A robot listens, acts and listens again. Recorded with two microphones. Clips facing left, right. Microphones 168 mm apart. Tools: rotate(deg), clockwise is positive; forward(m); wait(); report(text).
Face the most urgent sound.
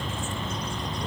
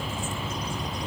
wait()
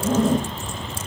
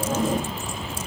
wait()
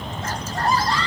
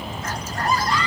rotate(-30)
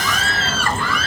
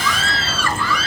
rotate(-115)
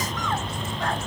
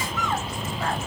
wait()
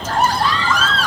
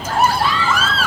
rotate(10)
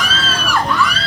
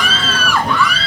report("Facing the scream.")